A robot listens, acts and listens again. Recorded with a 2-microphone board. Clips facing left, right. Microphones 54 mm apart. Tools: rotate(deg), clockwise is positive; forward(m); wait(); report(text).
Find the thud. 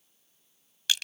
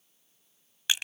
wait()
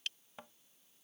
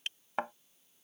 rotate(90)
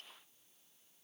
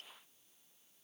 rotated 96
report("Facing where the thud came from. I can't hear it now.")